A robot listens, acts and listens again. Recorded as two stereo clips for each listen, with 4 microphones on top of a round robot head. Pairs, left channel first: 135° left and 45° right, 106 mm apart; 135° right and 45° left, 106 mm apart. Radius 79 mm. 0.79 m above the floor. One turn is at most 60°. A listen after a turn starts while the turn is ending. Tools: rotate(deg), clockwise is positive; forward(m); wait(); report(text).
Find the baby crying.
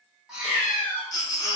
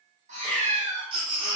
rotate(-60)
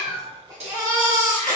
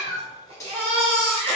rotate(-15)
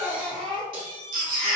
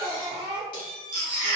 report("Facing the baby crying, 1 to 2 m away.")